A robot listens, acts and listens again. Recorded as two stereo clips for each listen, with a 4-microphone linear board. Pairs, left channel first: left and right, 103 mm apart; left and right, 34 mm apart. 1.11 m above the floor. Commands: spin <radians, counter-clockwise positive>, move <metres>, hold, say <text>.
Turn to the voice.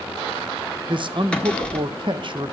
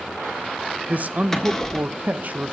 spin -0.87
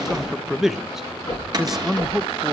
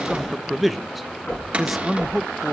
say Facing the man speaking, under 1 m away.